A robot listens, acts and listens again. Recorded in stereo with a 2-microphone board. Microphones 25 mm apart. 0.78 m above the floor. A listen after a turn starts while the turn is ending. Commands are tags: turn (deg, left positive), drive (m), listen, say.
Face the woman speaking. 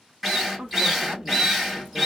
<turn deg="-50"/>
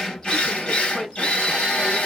<turn deg="-15"/>
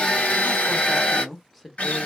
<say>Facing the woman speaking, 1 to 2 m away.</say>